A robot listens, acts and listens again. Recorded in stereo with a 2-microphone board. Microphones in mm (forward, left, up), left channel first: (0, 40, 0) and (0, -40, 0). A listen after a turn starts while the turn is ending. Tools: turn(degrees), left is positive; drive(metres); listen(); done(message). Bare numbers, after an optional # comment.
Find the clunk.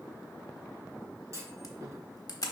# The clunk: about 40° right or 140° right.
turn(-40)
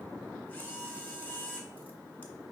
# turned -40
listen()
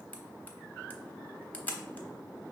done("I heard a clunk, but can't make it out now. It was about straight ahead or 100° right.")